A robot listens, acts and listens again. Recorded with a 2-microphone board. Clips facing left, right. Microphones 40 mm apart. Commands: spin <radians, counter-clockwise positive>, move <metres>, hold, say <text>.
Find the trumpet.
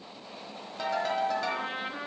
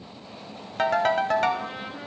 spin 0.61
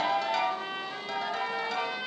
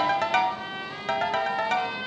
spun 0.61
say Facing the trumpet.